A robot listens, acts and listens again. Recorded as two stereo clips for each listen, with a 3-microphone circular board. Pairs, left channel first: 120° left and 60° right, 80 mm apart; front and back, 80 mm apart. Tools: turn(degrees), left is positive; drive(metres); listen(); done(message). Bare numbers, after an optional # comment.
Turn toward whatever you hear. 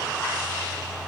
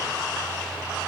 listen()
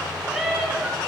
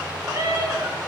# The cat meowing: 145° right.
turn(-145)
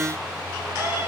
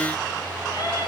listen()
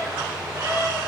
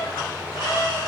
done("Found it: a cat meowing, straight ahead.")